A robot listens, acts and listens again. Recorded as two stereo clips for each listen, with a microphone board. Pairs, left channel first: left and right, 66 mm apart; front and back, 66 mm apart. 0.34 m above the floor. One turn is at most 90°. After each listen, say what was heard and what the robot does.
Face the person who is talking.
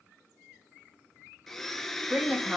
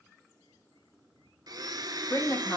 The woman speaking: 20° right. Turn 20° right.
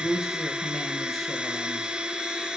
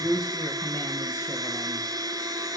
Facing the woman speaking, 2 to 4 m away.